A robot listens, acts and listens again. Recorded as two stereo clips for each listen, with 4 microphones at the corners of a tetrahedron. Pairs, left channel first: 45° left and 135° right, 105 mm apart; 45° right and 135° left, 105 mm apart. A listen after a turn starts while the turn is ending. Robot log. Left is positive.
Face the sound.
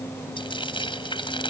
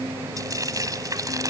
note: The frying: 80° left.
cmd yaw +80
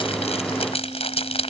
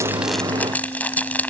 note: The frying is now 30° left.
cmd yaw +30
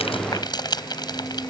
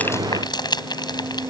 end: Found it: frying, straight ahead.